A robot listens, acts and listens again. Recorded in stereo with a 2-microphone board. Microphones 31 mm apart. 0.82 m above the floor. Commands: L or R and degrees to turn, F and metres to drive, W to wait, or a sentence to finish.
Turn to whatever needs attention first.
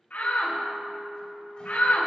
L70
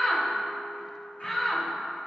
L25
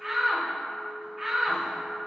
Facing the shout.